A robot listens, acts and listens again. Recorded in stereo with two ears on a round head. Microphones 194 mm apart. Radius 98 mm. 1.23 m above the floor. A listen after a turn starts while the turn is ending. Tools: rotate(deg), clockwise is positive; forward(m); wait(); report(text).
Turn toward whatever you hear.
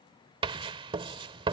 rotate(25)
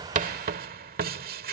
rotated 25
rotate(125)
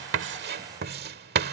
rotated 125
rotate(60)
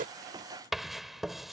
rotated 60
report("Facing the writing.")